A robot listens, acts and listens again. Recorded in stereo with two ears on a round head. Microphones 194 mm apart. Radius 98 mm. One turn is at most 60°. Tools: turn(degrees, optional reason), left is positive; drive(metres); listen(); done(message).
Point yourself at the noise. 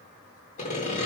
turn(degrees=35, reason="The sawing: about 35° left or 145° left.")
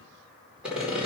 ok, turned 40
done("Found it: sawing, straight ahead, over 4 m away.")